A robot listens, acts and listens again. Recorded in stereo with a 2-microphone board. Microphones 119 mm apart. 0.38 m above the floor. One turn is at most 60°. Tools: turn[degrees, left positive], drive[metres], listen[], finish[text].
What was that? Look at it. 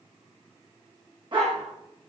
Thought: The dog barking: about 45° right or 135° right.
Action: turn[-45]
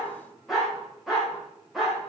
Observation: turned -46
Action: finish[Facing the dog barking.]